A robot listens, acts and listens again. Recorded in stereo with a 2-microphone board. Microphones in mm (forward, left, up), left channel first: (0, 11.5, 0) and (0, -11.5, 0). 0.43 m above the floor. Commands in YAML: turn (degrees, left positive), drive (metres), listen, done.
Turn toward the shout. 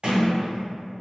listen: true
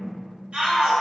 turn: -65
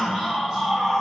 turn: -30
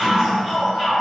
done: "Facing the shout, 1 to 2 m away."